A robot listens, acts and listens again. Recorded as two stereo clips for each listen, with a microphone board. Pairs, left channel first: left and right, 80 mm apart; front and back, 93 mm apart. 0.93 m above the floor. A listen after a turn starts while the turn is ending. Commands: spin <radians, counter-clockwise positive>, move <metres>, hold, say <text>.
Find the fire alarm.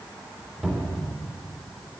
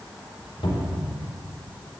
hold
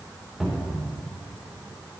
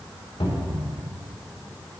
hold
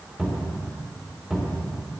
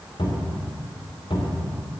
say I can't make out a fire alarm, only a cupboard door.